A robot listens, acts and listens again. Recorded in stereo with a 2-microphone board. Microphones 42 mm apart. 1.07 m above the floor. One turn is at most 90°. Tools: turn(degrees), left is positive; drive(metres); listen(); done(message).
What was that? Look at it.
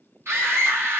turn(degrees=-90)
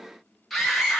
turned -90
done("Found it: a scream, straight ahead.")